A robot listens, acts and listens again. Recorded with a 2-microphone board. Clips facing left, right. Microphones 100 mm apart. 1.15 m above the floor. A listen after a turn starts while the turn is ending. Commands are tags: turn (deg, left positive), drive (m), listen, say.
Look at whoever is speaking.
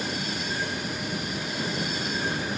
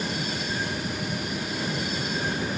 <listen/>
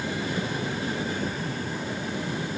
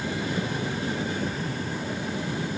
<listen/>
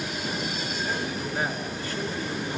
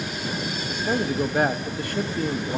<turn deg="-60"/>
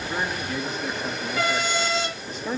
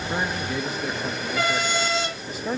<say>Found it: a man speaking, straight ahead, 1 to 2 m away.</say>